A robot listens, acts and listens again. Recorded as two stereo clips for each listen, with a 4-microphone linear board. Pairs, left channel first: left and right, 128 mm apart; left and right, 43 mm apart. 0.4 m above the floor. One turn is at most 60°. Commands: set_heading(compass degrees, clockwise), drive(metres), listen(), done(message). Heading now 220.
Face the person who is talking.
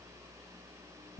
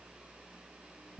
listen()
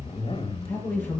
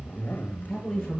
set_heading(190)
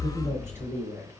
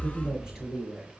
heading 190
set_heading(210)
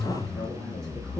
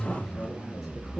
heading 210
listen()
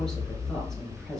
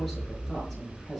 listen()
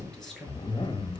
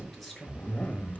done("Found it: a woman speaking, straight ahead.")